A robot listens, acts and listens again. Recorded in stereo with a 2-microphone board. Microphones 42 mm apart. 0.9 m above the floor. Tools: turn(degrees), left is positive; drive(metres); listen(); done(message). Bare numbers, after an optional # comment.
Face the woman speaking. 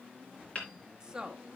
# The woman speaking: about 20° right or 160° right.
turn(-20)
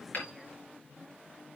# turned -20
listen()
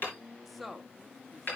done("Found it: a woman speaking, straight ahead.")